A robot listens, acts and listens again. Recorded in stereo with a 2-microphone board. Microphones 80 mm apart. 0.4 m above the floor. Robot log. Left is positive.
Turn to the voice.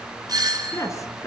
note: The woman speaking: about 40° left or 140° left.
cmd yaw +40
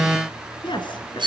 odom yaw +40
note: So it is at 100° left.
cmd yaw +100
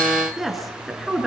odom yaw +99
end: Facing the woman speaking.